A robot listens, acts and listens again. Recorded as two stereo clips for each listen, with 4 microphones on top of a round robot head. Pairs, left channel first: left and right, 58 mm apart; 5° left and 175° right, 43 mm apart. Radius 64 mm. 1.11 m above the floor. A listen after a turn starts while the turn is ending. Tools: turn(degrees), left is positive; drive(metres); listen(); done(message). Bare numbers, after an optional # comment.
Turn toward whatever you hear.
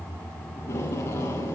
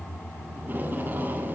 # The tape being pulled: 140° left.
turn(140)
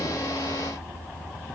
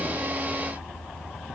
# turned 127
# Nothing new. It was at 15° left.
turn(15)
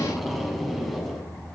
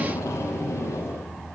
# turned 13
done("Found it: tape being pulled, straight ahead.")